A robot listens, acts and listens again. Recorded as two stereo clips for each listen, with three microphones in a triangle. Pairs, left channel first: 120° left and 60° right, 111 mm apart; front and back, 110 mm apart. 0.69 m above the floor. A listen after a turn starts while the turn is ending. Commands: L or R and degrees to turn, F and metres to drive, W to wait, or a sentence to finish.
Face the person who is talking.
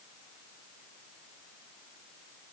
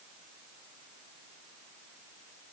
W
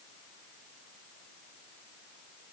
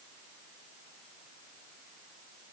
W
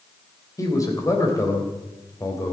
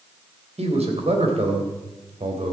L180
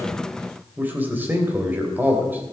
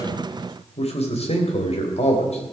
L10
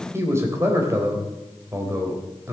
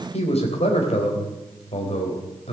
Facing the man speaking, 2 to 4 m away.